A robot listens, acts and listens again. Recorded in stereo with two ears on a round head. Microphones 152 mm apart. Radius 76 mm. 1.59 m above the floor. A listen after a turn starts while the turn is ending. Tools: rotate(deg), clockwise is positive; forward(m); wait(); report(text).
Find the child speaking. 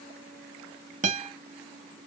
wait()
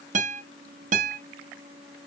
wait()
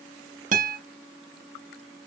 report("I can't make out a child speaking, only a guitar.")